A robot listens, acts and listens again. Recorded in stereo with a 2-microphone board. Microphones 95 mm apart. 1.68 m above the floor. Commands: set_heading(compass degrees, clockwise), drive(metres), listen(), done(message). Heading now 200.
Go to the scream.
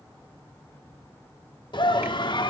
set_heading(145)
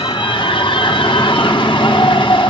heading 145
set_heading(80)
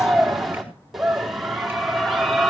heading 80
drive(1.0)
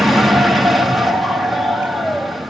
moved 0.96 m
drive(1.0)
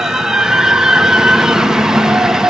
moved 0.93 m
drive(1.0)
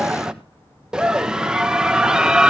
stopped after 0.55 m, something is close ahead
set_heading(90)
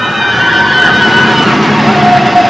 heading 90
done("Arrived at the scream, straight ahead.")